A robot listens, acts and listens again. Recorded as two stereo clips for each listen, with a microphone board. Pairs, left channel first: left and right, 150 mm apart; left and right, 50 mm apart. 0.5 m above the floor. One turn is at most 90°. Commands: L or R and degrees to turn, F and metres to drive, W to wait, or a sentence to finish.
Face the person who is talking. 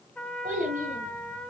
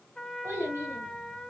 R65
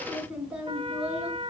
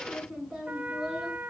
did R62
Facing the child speaking, over 4 m away.